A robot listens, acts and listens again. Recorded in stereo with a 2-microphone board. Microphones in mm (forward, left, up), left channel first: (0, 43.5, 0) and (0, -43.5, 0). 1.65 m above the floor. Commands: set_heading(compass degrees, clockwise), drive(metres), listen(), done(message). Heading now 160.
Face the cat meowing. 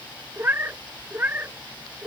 set_heading(180)
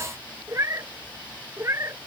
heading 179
set_heading(214)
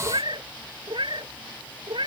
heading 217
set_heading(332)
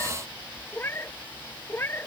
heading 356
set_heading(331)
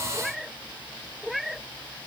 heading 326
done("Facing the cat meowing.")